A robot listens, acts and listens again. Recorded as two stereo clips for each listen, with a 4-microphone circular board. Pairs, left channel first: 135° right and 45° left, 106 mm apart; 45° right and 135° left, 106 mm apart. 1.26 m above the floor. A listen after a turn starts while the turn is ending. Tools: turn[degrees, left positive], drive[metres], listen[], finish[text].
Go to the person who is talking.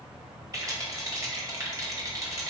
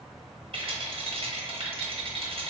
Action: listen[]
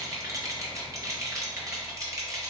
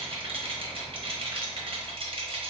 Action: listen[]
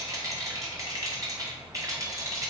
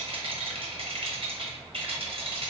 Action: finish[I can't make out anyone speaking to turn to.]